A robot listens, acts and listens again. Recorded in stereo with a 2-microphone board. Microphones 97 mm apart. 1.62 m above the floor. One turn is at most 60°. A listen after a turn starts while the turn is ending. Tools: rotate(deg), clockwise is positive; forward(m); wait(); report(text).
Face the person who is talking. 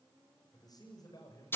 rotate(-45)
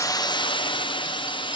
wait()
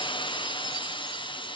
wait()
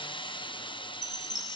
report("I heard a man speaking, but can't make it out now. It was about straight ahead or 90° left.")